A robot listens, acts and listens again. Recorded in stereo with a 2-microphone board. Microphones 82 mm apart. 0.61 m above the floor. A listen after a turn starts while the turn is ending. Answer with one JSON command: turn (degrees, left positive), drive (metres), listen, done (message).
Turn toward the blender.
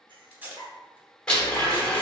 {"turn": 30}
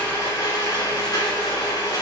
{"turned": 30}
{"turn": 140}
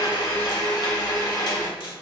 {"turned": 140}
{"turn": 60}
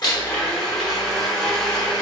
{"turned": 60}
{"done": "Found it: a blender, straight ahead."}